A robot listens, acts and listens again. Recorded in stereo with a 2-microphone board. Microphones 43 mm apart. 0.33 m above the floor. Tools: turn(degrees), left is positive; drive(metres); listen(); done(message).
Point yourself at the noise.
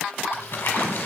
turn(degrees=50)
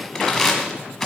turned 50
done("Facing the crumpling.")